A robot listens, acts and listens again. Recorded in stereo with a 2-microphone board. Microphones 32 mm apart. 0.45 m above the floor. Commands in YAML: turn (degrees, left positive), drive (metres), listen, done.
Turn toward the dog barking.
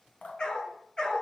turn: 25
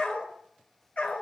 turn: 135
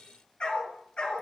turn: 35
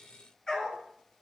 turn: 20
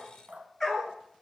done: "Facing the dog barking."